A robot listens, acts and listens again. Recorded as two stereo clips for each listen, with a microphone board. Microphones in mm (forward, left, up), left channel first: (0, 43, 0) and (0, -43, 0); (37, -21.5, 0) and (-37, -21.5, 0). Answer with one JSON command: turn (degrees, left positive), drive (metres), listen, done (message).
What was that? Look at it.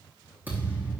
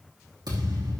{"turn": -160}
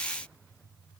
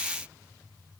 {"done": "I heard a thud from this way, but can't make it out now."}